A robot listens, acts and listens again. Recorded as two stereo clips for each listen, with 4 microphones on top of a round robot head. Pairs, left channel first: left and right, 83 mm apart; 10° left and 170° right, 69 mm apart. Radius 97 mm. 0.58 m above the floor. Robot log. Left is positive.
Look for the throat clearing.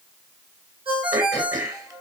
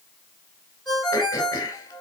note: The throat clearing: 40° right.
cmd yaw -40
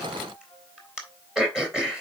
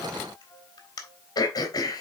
note: The throat clearing is now 10° right.
cmd yaw -10
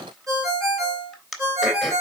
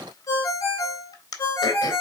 end: Facing the throat clearing.